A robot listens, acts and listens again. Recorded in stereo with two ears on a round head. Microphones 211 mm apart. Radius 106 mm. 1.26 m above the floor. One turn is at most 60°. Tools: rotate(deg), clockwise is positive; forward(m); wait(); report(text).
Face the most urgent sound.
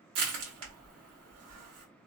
wait()
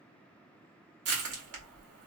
wait()
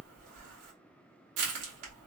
report("I can't make out anything urgent to turn to.")